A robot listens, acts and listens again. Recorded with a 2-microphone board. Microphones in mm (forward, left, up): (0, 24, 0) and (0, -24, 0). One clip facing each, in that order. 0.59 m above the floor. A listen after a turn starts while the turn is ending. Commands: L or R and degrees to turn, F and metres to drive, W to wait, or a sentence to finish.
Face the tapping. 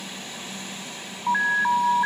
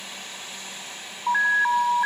W
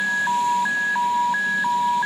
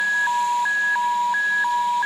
W
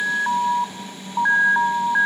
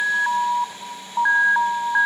I can't make out tapping, only an alarm.